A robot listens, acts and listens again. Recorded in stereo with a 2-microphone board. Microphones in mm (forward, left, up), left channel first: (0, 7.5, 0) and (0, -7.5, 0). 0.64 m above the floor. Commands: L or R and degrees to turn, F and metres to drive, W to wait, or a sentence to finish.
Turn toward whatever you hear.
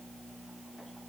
W
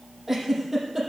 R25
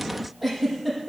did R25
Facing the giggle, over 4 m away.